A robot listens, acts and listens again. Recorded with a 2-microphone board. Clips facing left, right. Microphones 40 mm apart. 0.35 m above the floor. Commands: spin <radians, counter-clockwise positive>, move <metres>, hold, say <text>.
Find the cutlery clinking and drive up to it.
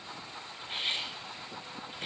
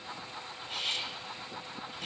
spin 0.52
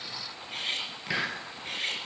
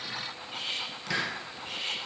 spin 2.01
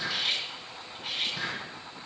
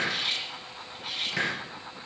move 1.0
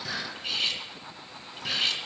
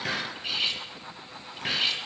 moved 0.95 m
move 1.0
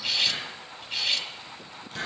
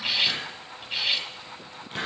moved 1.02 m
spin -0.26
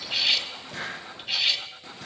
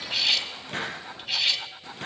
move 1.0
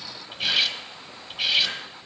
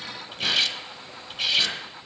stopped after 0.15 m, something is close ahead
spin 0.17
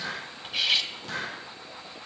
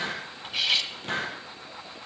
say Arrived at the cutlery clinking, straight ahead.